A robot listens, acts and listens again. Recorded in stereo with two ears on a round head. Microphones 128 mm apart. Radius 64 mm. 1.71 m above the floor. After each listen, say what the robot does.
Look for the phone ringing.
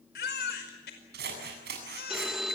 Turn 30° right.
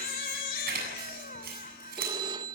Turn 145° right.
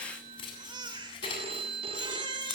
Turn 40° right.
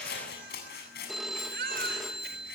Found it: a phone ringing, straight ahead.